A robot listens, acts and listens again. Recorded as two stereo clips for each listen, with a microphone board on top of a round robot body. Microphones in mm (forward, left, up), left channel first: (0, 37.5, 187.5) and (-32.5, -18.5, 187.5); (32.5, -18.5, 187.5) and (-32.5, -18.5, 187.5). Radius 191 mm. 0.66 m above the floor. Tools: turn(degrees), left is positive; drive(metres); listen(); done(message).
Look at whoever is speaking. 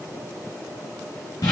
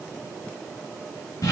listen()
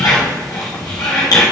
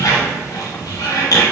listen()
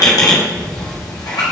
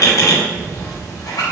done("I can't make out anyone speaking, only a squeak.")